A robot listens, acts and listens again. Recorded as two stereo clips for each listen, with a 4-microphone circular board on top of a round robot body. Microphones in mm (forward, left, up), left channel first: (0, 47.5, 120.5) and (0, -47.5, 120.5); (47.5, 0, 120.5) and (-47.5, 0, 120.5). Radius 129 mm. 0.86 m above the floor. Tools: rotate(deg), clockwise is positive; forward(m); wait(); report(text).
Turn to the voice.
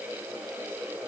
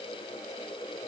wait()
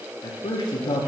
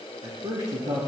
rotate(-130)
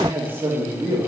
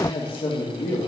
rotate(20)
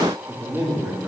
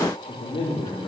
report("Facing the man speaking, 2 to 4 m away.")